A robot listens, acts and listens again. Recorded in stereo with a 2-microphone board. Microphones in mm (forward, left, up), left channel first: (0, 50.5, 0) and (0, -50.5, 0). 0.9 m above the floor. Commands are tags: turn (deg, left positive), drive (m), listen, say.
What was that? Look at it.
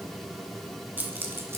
<turn deg="-20"/>
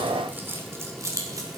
<turn deg="-30"/>
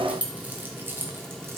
<turn deg="-20"/>
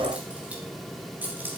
<turn deg="-15"/>
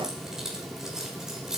<turn deg="-30"/>
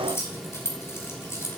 <turn deg="25"/>
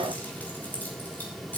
<turn deg="15"/>
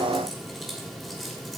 <listen/>
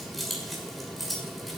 <say>Found it: keys jangling, straight ahead.</say>